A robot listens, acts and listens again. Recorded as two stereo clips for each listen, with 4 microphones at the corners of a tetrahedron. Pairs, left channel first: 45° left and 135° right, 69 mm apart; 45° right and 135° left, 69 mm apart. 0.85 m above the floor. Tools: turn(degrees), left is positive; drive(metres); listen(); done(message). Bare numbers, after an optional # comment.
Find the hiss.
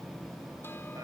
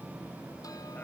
listen()
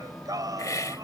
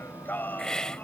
# The hiss: 30° left.
turn(30)
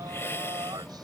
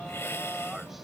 done("Found it: a hiss, straight ahead.")